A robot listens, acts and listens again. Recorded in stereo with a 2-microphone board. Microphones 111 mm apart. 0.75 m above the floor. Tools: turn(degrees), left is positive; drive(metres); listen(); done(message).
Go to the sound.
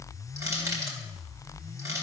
turn(degrees=-30)
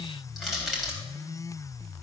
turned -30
drive(metres=1.0)
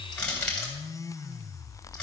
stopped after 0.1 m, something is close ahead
turn(degrees=10)
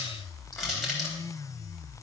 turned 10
done("Something is in my way. I am facing the crushing but have not reached it.")